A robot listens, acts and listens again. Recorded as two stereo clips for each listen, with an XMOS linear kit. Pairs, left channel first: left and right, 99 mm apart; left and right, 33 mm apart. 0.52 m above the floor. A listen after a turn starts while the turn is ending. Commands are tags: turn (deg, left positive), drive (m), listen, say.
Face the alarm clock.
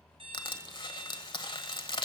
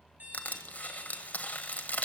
<turn deg="-65"/>
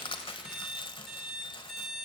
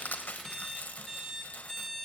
<say>Facing the alarm clock, over 4 m away.</say>